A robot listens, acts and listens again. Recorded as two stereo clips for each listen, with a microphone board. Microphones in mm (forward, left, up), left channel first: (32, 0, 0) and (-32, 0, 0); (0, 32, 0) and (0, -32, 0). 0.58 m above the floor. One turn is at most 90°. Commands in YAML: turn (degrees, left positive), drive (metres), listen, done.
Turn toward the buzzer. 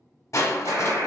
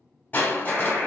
turn: -90
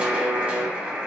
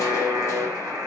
turn: -90
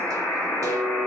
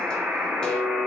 turn: -35
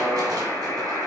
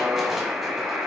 turn: -15
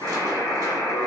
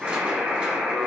done: "Found it: a buzzer, straight ahead."